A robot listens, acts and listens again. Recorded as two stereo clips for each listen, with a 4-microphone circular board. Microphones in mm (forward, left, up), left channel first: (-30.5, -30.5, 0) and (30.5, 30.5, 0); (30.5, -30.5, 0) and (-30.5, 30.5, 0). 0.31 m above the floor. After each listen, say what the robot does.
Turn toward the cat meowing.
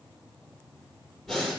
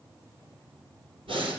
Keep listening.
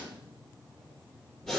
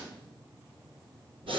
Keep listening.
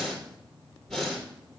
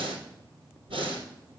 I can't make out a cat meowing to turn to.